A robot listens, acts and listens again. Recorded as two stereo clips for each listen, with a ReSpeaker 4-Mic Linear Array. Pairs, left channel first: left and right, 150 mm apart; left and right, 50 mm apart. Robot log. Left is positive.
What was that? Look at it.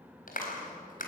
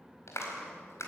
note: The clap: about 65° left or 115° left.
cmd yaw +65
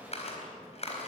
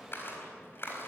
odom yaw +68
note: So it is at 45° left.
cmd yaw +45
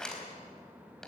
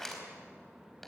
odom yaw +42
end: Facing the clap.